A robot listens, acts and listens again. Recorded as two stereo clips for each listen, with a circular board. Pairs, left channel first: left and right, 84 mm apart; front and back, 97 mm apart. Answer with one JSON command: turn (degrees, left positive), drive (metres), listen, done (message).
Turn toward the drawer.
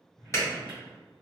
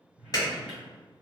{"turn": 100}
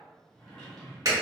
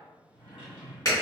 {"turn": 10}
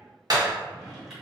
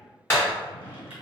{"done": "Found it: a drawer, straight ahead, 1 to 2 m away."}